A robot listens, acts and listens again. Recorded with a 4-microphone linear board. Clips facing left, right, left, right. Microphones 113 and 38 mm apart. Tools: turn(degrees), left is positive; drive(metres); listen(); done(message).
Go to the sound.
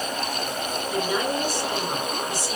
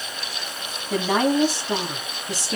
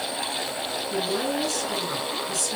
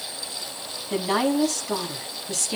turn(degrees=-90)
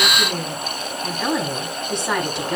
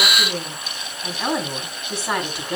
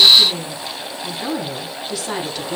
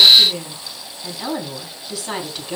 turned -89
drive(metres=1.0)
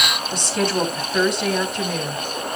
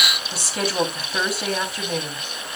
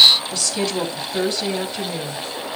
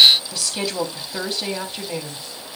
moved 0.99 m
drive(metres=1.0)
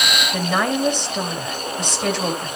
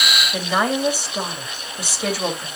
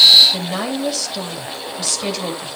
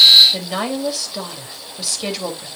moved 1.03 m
drive(metres=1.0)
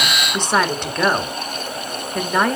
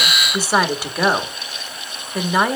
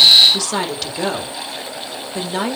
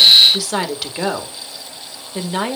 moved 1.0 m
drive(metres=1.0)
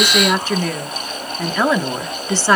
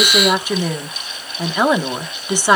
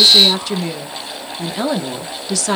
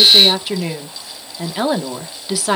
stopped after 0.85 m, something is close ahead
turn(degrees=-15)
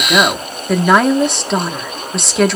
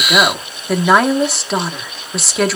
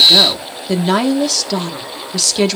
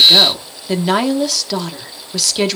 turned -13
done("Arrived at the woman speaking, straight ahead.")